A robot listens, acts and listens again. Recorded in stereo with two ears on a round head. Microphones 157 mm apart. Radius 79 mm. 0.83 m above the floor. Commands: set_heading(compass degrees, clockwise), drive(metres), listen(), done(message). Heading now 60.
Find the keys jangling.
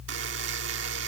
listen()
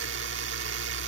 listen()
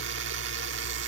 done("I can't make out keys jangling, only a buzzer.")